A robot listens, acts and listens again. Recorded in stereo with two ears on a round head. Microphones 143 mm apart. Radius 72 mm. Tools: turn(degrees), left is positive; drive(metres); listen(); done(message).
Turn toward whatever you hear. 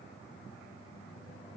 listen()
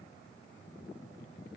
listen()
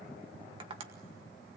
turn(degrees=-35)
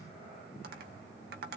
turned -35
turn(degrees=-110)
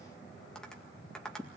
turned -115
done("Found it: tapping, straight ahead.")